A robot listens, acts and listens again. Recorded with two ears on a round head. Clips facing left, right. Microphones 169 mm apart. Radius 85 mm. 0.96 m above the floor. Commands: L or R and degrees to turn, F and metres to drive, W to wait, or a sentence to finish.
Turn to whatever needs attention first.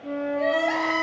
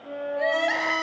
R15
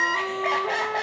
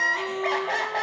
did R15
Found it: crying, straight ahead.